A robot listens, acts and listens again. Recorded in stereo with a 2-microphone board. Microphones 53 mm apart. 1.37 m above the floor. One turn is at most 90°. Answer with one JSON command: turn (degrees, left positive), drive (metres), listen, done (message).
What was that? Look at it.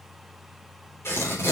{"turn": 55}
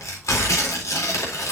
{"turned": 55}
{"turn": 70}
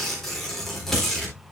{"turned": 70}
{"done": "Found it: tearing paper, straight ahead."}